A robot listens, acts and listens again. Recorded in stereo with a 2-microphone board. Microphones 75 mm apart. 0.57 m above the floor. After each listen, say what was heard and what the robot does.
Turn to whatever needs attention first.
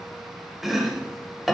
Keep listening.
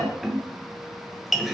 Keep listening.
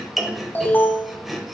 The alarm: about 30° left or 150° left. Turn 30° left.
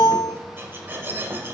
So it is at 120° left. Turn 120° left.
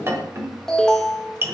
The alarm is now 10° left. Turn 10° left.
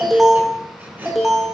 Found it: an alarm, straight ahead.